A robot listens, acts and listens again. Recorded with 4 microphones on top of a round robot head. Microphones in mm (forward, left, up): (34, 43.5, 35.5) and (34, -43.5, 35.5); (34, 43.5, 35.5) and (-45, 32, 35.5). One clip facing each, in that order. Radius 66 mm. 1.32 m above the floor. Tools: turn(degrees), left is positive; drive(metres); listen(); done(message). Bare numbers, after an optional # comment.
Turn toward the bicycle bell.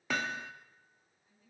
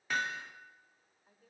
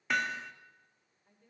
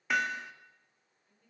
listen()
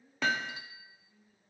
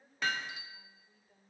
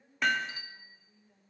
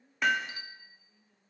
# The bicycle bell: 60° left.
turn(60)
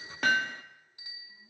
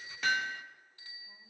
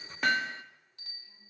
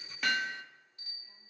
# The bicycle bell is now 20° left.
turn(20)
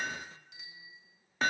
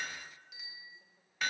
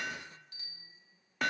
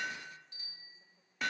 done("Facing the bicycle bell, 2 to 4 m away.")